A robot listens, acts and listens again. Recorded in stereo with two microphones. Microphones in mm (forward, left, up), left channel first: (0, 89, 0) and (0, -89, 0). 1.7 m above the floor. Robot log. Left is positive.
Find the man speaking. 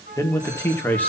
cmd yaw +30
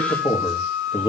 note: So it is at 155° left.
cmd yaw +155
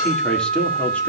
end: Facing the man speaking, 2 to 4 m away.